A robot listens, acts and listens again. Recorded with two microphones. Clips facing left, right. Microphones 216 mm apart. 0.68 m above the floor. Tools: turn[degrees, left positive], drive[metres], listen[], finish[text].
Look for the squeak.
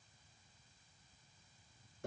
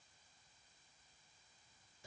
Action: listen[]
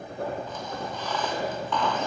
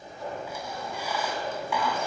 Action: turn[-30]
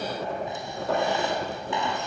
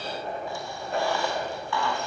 Thought: So it is at 20° left.
Action: turn[20]
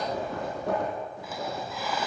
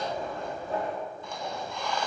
Action: finish[Facing the squeak.]